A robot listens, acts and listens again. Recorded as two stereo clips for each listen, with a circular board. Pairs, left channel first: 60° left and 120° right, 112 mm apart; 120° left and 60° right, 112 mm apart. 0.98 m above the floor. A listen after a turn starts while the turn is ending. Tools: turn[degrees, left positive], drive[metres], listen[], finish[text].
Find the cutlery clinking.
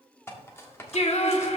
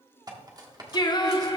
Action: finish[Facing the cutlery clinking.]